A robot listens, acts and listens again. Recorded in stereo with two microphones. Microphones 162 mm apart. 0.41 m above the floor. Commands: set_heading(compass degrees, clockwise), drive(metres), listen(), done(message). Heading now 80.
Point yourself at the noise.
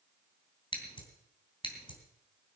set_heading(50)
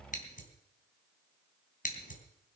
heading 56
set_heading(291)
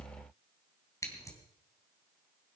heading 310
set_heading(290)
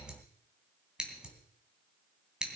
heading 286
done("Facing the scissors.")